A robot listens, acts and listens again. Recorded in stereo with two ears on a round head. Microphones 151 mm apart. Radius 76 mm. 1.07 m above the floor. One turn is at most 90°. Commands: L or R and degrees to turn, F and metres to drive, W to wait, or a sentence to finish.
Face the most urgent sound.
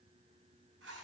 W
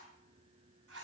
W
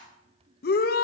L60
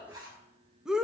Found it: a shout, straight ahead, under 1 m away.